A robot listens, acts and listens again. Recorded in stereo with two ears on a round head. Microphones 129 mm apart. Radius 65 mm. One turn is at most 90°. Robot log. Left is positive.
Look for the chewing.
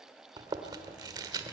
note: The chewing: about 25° right or 155° right.
cmd yaw -25
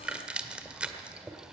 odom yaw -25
note: So it is at 10° right.
cmd yaw -10
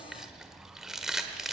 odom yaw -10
end: Found it: chewing, straight ahead, 1 to 2 m away.